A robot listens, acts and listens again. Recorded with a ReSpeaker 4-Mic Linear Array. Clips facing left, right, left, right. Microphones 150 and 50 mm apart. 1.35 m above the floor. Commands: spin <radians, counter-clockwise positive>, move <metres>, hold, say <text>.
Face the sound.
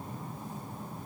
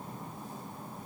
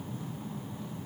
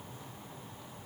hold
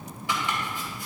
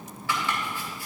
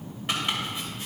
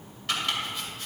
spin 0.35
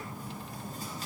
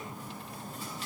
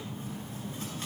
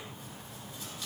hold
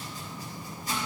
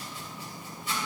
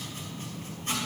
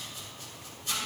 spin 2.36
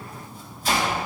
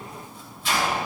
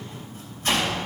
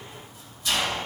spin 0.79
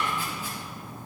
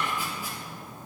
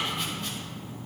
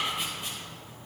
spin -0.26
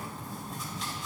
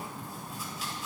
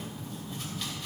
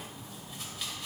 hold
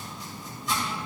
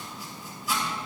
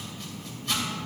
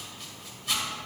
say Facing the chopping, 2 to 4 m away.